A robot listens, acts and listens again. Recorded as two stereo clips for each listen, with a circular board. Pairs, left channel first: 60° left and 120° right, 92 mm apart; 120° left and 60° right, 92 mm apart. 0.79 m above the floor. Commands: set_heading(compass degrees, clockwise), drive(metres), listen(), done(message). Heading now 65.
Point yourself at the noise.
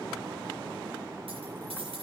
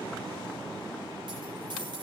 set_heading(160)
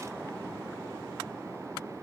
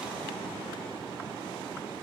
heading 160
done("Facing where the dropped coin came from. I can't hear it now.")